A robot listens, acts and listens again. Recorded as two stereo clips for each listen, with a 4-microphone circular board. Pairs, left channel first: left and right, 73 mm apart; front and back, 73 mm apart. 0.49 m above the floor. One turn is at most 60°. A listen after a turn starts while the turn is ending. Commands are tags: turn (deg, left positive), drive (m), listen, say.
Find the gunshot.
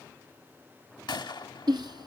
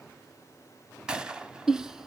<turn deg="60"/>
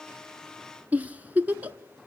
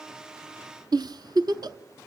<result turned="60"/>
<turn deg="40"/>
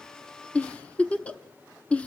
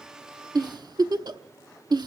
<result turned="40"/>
<say>I heard a gunshot from this way, but can't make it out now.</say>